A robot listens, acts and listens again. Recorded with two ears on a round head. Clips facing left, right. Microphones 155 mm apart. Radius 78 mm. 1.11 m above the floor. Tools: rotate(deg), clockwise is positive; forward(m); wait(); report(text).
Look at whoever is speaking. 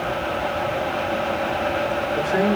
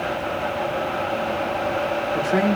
rotate(75)
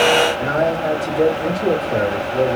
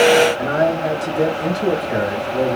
rotate(30)
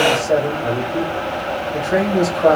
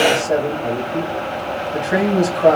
rotate(15)
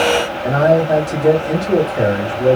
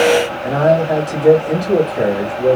report("Facing the man speaking, 1 to 2 m away.")